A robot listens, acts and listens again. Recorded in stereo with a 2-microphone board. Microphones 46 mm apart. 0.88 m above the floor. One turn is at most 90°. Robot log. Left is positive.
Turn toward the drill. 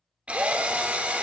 note: The drill: about 30° right or 150° right.
cmd yaw -30
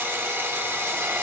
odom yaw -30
note: So it is at 120° right.
cmd yaw -90
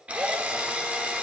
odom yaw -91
note: The drill is now 30° right.
cmd yaw -30
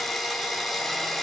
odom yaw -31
end: Found it: a drill, straight ahead.